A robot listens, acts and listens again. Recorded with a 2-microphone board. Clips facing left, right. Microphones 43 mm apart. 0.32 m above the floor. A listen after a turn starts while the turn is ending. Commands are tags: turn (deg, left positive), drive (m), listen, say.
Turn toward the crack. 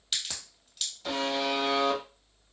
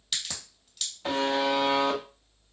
<turn deg="30"/>
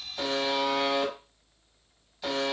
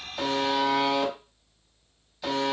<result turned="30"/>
<listen/>
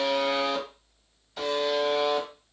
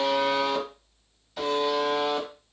<say>I heard a crack, but can't make it out now. It was about 30° right or 150° left.</say>